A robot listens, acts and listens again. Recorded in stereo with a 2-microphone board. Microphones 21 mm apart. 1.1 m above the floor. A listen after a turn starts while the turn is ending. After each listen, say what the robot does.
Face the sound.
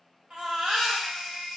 Turn 70° right.
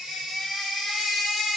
Facing the baby crying.